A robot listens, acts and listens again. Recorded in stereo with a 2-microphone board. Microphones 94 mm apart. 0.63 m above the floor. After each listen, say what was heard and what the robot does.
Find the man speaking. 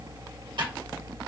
Keep listening.
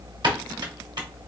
Keep listening.
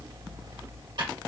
I can't make out a man speaking to turn to.